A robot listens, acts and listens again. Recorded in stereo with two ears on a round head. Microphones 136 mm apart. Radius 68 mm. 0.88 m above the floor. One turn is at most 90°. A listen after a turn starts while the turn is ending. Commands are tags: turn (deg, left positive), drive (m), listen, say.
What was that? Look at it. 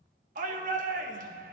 <turn deg="-55"/>
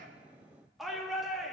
<say>Facing the shout.</say>